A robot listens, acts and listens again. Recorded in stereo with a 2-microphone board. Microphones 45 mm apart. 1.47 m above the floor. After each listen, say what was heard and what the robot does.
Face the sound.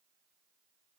Keep listening.
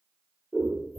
Turn 30° left.
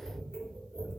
So it is at 20° right. Turn 20° right.
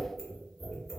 Facing the scissors, 1 to 2 m away.